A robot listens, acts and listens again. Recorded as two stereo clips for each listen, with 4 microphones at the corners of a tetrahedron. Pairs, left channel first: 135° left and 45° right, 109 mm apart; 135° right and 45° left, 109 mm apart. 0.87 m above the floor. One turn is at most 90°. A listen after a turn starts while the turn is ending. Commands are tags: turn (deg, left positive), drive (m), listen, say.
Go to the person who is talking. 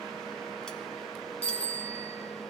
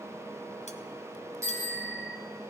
<listen/>
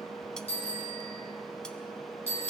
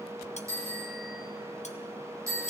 <listen/>
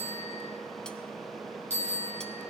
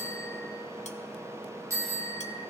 <say>I can't make out anyone speaking to turn to.</say>